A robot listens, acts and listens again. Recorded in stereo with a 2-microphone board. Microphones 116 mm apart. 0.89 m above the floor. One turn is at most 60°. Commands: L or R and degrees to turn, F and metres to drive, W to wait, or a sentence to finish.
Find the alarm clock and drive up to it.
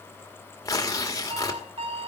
R55
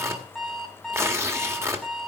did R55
F1.0
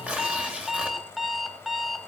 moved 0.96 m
F1.0
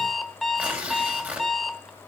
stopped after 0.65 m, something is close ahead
I am next to the alarm clock.